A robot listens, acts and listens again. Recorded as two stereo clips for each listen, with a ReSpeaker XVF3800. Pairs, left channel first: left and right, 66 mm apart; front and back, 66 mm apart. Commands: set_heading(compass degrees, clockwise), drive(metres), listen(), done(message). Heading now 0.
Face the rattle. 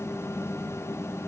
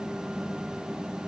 listen()
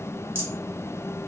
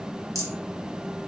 set_heading(145)
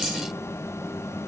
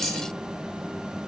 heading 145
listen()
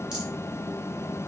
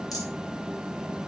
listen()
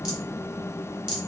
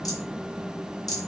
set_heading(155)
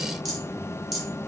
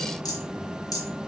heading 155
done("Facing the rattle.")